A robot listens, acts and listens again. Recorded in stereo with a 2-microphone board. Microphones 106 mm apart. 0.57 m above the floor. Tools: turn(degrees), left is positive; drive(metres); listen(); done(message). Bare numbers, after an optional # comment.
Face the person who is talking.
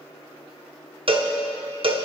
listen()
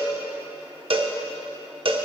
listen()
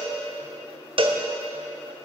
done("I can't make out anyone speaking, only a cowbell.")